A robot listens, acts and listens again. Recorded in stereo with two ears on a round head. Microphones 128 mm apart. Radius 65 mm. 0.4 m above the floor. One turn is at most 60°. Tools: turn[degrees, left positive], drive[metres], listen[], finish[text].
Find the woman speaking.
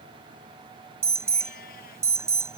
Action: listen[]
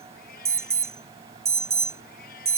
Action: listen[]
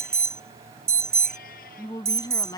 Thought: The woman speaking: about 25° left or 155° left.
Action: turn[25]
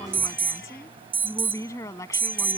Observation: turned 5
Thought: The woman speaking: about 20° left or 160° left.
Action: turn[20]
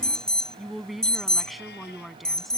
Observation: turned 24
Action: finish[Facing the woman speaking.]